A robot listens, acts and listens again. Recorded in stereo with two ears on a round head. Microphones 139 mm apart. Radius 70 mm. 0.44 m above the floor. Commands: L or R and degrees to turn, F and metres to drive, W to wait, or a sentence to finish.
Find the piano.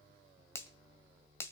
W
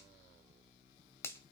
W
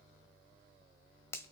I can't make out a piano, only a finger snap.